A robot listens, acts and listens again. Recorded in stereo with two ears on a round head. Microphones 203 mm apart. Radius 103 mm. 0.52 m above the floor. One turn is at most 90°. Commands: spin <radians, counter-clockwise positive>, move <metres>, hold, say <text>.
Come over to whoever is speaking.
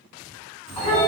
spin -0.61
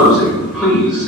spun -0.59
hold
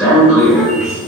move 1.0
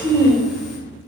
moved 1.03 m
move 1.0
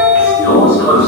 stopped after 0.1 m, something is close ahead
hold
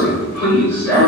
hold
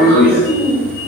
spin -0.17
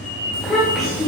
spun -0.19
say Arrived at the child speaking, straight ahead.